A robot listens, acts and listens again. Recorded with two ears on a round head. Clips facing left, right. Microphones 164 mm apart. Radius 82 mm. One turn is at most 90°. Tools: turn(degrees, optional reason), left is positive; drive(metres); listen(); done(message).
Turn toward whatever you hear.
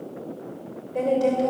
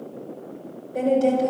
turn(degrees=30)
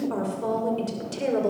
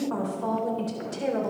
turn(degrees=90, reason="So it is at 140° left.")
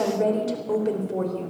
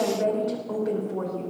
turn(degrees=35, reason="The woman speaking is now 35° left.")
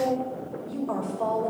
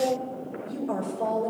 turn(degrees=-20, reason="The woman speaking is now 20° right.")
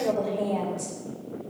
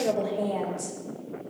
done("Facing the woman speaking.")